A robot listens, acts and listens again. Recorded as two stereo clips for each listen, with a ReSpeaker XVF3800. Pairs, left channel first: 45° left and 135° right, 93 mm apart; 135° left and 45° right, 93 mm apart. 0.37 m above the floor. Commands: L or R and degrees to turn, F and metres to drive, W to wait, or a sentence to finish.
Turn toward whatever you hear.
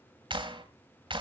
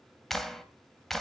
R140
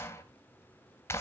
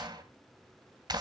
R15
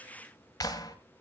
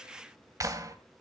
Facing the clap.